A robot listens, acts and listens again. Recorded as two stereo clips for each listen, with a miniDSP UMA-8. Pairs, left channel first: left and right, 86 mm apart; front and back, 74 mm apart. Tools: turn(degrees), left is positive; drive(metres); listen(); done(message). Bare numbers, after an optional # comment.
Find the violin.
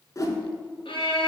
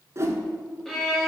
# The violin: 85° left.
turn(85)
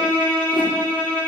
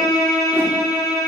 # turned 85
# The violin is now 20° left.
turn(20)
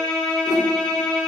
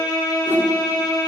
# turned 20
done("Found it: a violin, straight ahead.")